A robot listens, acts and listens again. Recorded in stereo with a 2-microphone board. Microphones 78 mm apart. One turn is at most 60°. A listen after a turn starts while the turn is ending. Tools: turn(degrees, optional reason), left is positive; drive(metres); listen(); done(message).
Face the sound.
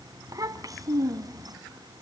turn(degrees=-50, reason="The child speaking: about 50° right or 130° right.")
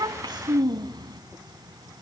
turn(degrees=-60, reason="So it is at 75° right.")
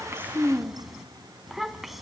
done("Facing the child speaking, 1 to 2 m away.")